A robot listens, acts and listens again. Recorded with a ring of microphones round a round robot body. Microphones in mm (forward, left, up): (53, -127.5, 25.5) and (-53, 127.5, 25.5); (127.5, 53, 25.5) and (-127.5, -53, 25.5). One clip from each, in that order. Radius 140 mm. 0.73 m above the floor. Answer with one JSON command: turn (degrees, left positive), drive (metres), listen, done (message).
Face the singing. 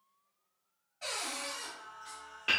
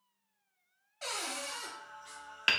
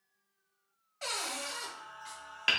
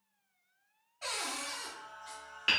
{"turn": 20}
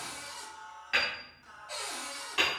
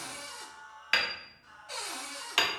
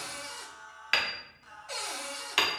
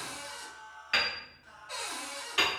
{"done": "Facing the singing."}